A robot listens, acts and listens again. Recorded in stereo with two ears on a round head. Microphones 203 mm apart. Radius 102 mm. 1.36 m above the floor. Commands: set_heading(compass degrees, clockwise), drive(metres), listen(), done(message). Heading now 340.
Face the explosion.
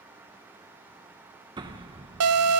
set_heading(0)
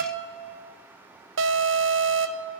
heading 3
listen()
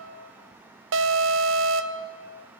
done("I heard an explosion, but can't make it out now. It was about 5° left or 140° right.")